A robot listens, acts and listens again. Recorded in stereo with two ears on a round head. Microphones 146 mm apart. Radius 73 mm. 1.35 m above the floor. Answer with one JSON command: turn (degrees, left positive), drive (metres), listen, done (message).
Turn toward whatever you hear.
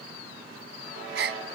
{"turn": -75}
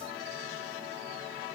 {"listen": true}
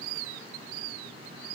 {"done": "I heard a gasp, but can't make it out now. It was about straight ahead or 30° right."}